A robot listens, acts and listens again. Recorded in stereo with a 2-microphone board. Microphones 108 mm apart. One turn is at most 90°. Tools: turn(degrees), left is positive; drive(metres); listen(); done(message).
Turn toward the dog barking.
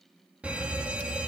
listen()
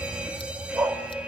turn(degrees=-25)
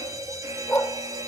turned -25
turn(degrees=20)
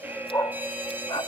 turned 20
turn(degrees=40)
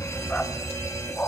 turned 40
turn(degrees=15)
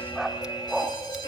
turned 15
done("Found it: a dog barking, straight ahead.")